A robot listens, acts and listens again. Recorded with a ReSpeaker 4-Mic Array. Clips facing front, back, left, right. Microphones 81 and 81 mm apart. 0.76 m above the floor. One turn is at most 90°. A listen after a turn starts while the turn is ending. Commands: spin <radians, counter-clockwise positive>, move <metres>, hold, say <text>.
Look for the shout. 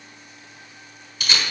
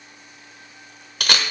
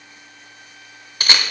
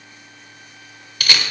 hold
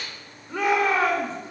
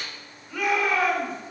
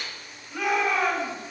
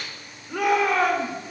spin -1.05
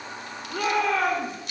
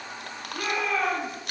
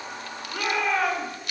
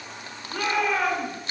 say Facing the shout, 2 to 4 m away.